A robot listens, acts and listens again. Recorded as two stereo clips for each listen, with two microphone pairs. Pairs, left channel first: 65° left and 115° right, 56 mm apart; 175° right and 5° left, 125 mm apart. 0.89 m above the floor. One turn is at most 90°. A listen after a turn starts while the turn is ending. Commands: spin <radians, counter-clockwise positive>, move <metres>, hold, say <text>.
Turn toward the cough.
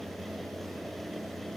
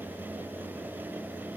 hold
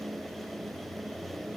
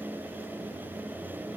hold
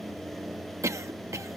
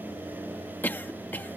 spin -1.57
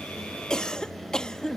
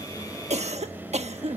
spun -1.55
spin -0.17
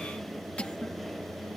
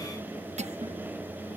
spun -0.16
say Facing the cough.